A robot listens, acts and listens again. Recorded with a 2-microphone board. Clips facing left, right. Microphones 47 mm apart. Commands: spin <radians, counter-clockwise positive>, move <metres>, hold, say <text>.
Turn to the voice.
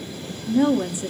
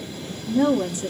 spin 0.35
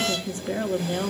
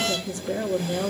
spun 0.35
spin 2.36
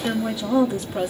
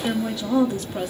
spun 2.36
say Found it: a woman speaking, straight ahead, 1 to 2 m away.